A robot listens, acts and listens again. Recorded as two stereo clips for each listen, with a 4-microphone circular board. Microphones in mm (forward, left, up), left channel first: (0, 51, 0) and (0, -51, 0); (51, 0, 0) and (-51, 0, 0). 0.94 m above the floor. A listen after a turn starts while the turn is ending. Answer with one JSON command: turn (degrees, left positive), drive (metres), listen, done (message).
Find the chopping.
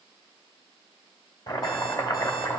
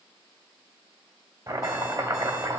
{"turn": 130}
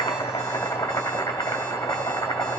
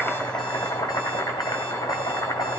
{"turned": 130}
{"turn": 35}
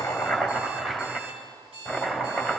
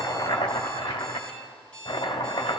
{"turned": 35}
{"done": "Facing the chopping, 1 to 2 m away."}